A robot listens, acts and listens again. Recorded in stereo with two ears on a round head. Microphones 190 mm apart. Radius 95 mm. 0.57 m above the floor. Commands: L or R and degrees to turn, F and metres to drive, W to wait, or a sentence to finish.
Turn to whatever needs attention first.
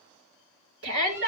R65
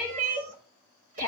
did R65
R50
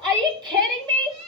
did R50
R25
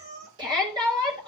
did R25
R25
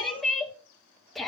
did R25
Found it: a shout, straight ahead, 2 to 4 m away.